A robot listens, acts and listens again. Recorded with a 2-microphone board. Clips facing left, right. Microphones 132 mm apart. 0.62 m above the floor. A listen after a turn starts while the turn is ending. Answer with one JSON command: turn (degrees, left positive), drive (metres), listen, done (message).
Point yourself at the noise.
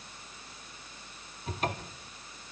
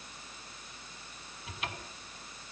{"turn": 45}
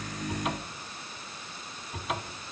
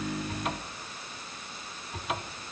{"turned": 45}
{"done": "Facing the cupboard door."}